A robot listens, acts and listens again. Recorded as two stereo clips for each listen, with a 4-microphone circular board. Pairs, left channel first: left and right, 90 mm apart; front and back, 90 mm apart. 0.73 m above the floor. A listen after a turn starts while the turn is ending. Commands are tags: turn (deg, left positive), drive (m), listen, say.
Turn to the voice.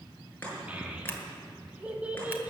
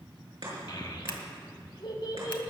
<turn deg="-15"/>
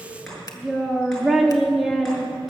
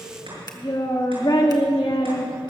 <say>Found it: a child speaking, straight ahead, 1 to 2 m away.</say>